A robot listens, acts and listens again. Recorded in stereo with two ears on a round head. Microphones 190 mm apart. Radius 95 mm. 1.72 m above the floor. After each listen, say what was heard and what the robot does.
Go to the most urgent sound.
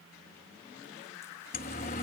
The siren: about 40° left or 140° left. Turn 40° left.
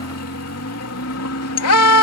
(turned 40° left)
So it is at 95° left. Turn 95° left.
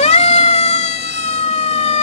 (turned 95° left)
The siren is now 30° left. Turn 30° left.
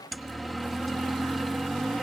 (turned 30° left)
Drive 1.0 m forward.
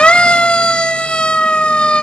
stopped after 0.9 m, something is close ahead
Blocked. The siren is further on, straight ahead.